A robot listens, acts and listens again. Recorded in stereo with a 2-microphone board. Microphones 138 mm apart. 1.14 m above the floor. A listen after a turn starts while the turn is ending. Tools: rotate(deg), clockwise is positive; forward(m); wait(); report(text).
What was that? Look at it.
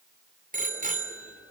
rotate(90)
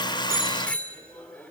rotate(-10)
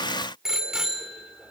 report("Facing the bicycle bell, 2 to 4 m away.")